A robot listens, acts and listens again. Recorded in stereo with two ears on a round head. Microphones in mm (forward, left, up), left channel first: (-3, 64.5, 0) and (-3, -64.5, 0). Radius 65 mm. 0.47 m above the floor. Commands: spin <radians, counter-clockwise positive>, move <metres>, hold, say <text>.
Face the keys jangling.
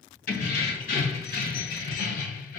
spin 1.05
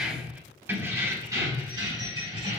spin -0.70
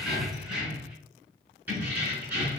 spin -0.26
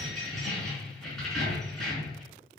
say Facing the keys jangling.